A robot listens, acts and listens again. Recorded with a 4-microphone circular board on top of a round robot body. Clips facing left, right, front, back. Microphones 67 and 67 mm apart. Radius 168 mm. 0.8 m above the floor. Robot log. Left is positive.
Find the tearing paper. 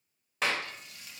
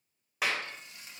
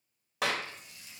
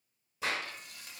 cmd idle
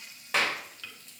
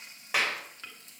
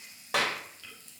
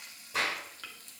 cmd idle
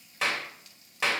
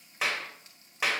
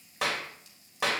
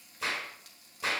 end: I can't make out tearing paper, only frying and a clap.